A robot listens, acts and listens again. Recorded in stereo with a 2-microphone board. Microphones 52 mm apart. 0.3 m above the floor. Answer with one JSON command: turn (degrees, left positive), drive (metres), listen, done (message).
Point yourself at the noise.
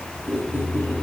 {"turn": -40}
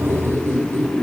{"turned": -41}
{"turn": -100}
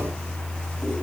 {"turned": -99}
{"listen": true}
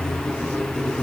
{"done": "Found it: a squeak, straight ahead."}